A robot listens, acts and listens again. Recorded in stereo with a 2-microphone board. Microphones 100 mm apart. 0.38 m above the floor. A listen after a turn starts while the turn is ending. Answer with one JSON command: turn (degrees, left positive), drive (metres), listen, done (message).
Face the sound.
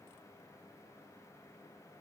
{"listen": true}
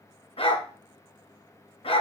{"turn": 70}
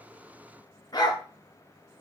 {"turn": 40}
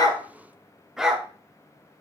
{"done": "Facing the dog barking, 1 to 2 m away."}